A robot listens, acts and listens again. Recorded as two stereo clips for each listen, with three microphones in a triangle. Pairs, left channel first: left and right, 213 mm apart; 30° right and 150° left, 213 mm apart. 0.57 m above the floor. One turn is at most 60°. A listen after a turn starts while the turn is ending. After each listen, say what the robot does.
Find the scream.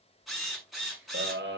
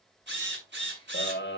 Turn 60° right.
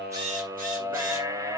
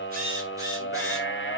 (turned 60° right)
Turn 15° right.
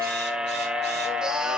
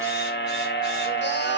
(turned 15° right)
Found it: a scream, straight ahead, 2 to 4 m away.